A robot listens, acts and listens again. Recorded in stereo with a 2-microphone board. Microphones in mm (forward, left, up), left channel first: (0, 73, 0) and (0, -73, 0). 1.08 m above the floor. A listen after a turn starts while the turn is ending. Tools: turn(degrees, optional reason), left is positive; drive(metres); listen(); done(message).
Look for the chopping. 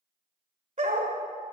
listen()
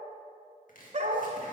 turn(degrees=70, reason="The chopping: about 70° left or 110° left.")
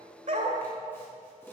turn(degrees=15, reason="So it is at 15° left.")
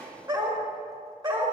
done("Found it: chopping, straight ahead, 1 to 2 m away.")